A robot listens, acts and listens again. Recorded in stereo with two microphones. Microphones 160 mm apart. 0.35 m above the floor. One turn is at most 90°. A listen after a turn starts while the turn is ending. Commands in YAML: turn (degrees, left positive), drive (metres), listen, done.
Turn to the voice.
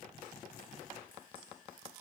listen: true
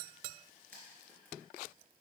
listen: true
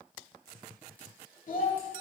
turn: 55
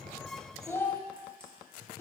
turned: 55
turn: 15
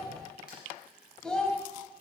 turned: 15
done: "Facing the child speaking, 1 to 2 m away."